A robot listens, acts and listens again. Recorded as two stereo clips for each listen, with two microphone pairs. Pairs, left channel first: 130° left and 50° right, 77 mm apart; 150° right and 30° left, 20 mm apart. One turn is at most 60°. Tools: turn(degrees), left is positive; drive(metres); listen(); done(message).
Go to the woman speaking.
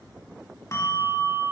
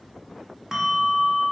listen()
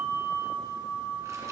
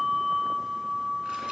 listen()
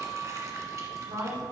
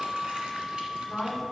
turn(degrees=-60)
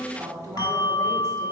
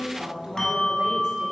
drive(metres=1.0)
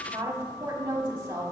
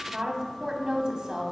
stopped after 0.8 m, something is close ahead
done("I am next to the woman speaking.")